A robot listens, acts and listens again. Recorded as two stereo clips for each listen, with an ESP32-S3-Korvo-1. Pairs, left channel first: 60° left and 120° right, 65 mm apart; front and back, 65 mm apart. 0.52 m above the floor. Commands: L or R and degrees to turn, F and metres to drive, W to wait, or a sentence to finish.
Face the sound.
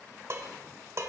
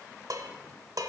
R160
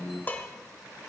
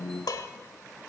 Found it: dishes clattering, straight ahead, 1 to 2 m away.